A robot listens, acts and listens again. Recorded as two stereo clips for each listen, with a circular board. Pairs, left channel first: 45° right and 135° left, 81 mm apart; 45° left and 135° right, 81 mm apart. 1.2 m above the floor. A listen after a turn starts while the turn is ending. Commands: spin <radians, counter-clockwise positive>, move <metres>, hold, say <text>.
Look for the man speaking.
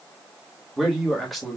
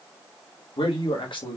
spin 0.70
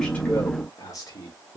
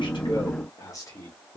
say Facing the man speaking.